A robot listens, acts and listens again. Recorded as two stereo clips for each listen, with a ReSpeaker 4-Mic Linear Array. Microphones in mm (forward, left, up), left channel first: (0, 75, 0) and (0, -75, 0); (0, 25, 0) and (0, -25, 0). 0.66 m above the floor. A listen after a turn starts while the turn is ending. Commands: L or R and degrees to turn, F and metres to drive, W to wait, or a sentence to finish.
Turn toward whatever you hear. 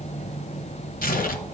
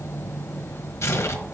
L70
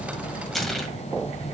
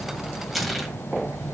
Found it: tearing paper, straight ahead, 1 to 2 m away.